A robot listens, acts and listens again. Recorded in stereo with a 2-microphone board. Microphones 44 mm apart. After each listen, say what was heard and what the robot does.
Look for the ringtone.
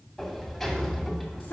Keep listening.
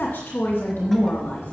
Keep listening.
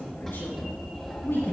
I can't make out a ringtone, only a sliding door and a woman speaking.